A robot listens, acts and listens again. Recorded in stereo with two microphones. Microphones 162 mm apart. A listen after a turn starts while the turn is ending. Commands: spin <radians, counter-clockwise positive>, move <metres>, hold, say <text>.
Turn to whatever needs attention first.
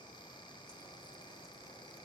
hold
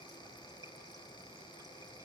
hold
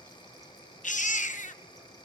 spin 0.87
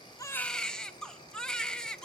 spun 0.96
say Facing the baby crying.